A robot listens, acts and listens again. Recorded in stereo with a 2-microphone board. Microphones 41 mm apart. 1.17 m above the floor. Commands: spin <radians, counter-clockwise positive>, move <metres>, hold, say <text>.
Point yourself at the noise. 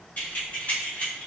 spin 0.61
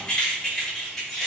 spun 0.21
spin 0.52
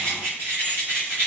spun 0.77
spin -1.13
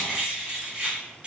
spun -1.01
spin -0.44
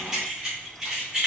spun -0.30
spin -0.35
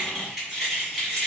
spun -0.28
say Found it: keys jangling, straight ahead.